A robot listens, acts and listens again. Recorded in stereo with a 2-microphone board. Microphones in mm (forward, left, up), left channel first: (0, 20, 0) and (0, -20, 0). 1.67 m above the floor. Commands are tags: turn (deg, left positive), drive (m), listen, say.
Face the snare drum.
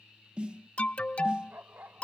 <turn deg="-25"/>
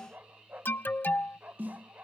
<turn deg="-130"/>
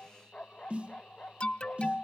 <turn deg="-35"/>
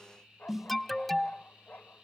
<turn deg="-10"/>
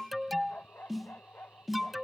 <say>Found it: a snare drum, straight ahead.</say>